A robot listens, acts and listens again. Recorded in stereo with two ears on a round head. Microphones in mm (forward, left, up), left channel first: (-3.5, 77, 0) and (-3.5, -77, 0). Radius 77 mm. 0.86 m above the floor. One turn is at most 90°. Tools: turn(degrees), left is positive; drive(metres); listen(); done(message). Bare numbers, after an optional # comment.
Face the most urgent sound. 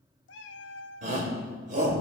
# The shout: about 50° right or 130° right.
turn(-50)
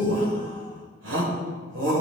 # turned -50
# So it is at 80° right.
turn(-80)
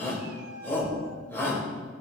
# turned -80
# The shout is now 15° left.
turn(15)
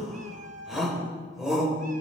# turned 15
done("Found it: a shout, straight ahead.")